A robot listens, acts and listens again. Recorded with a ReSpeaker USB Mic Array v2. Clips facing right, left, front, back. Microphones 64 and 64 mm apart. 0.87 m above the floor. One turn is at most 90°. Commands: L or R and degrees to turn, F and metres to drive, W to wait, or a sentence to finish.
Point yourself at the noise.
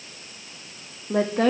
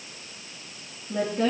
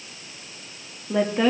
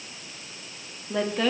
R75
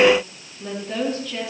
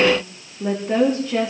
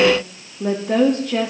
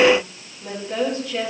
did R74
L35
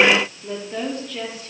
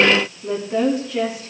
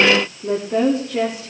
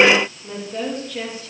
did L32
L15
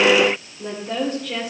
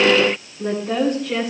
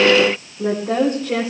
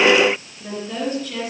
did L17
L10
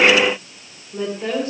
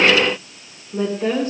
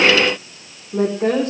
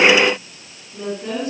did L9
Facing the woman speaking, 2 to 4 m away.